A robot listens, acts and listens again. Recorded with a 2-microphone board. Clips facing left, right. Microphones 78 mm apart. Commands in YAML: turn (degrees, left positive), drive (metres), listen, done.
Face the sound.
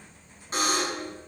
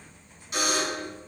turn: 35
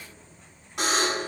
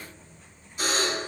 turn: 105
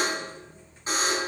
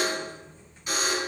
turn: 30
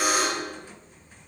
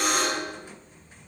done: "Found it: a buzzer, straight ahead, over 4 m away."